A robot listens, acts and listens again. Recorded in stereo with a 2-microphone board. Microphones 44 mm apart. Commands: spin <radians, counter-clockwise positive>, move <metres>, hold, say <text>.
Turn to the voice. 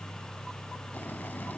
hold
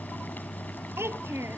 spin -1.31
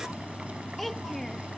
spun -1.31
say Found it: a child speaking, straight ahead.